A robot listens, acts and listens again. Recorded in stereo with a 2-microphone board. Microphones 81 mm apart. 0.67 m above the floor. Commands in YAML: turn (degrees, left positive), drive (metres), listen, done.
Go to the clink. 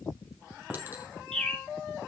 turn: -25
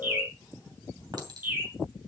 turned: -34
turn: -120
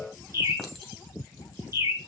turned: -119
drive: 1.0
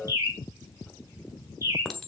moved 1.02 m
drive: 1.0
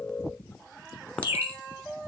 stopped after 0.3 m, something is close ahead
turn: 15
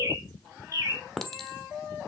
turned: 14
done: "I am next to the clink."